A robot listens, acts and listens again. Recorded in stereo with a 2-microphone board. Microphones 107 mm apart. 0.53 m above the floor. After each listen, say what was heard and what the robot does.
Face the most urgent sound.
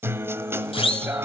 The siren: about 60° left or 120° left. Turn 60° left.
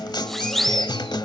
Facing the siren.